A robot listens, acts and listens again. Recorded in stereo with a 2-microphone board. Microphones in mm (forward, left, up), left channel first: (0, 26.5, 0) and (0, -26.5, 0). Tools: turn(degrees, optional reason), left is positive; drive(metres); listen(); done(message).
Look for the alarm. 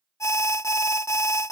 turn(degrees=65, reason="The alarm: about 65° left or 115° left.")
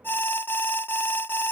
turn(degrees=45, reason="So it is at 45° left.")
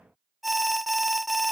done("Found it: an alarm, straight ahead.")